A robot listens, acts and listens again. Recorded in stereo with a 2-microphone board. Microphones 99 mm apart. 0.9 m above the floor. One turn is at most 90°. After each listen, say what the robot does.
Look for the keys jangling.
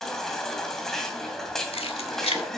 Turn 90° left.
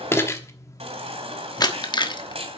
Turn 50° left.
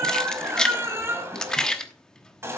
Facing the keys jangling.